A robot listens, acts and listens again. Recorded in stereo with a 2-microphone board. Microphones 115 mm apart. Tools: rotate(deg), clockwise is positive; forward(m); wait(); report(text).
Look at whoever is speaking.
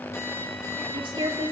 rotate(50)
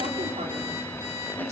wait()
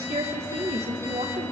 rotate(80)
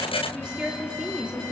rotate(10)
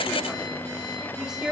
report("Found it: a woman speaking, straight ahead, 2 to 4 m away.")